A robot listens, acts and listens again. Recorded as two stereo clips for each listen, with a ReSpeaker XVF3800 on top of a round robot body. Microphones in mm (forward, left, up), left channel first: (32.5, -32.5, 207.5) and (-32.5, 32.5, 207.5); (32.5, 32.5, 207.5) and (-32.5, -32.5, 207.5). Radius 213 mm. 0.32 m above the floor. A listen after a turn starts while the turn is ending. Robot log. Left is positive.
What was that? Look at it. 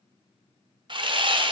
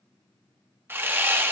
note: The sawing: 160° left.
cmd yaw +160
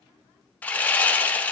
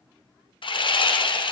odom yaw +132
note: The sawing is now 30° left.
cmd yaw +30
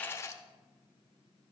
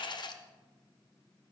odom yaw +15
note: Nothing new. It was at 15° left.
cmd yaw +15
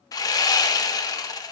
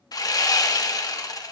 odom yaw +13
end: Facing the sawing, 1 to 2 m away.